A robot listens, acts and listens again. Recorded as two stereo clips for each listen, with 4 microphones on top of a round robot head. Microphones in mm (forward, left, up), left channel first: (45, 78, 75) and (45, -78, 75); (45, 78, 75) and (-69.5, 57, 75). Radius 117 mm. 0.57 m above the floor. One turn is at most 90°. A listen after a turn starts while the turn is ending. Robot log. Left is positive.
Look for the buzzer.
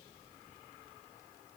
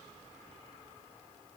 cmd idle
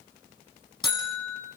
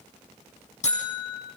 note: The buzzer: 25° left.
cmd yaw +25
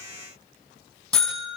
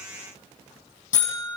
end: Found it: a buzzer, straight ahead.